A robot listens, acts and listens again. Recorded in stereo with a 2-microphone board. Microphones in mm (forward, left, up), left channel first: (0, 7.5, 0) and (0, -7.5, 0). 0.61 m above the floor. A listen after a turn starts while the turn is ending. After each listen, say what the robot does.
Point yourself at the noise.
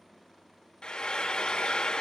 Turn 70° left.
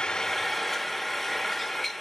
Facing the frying.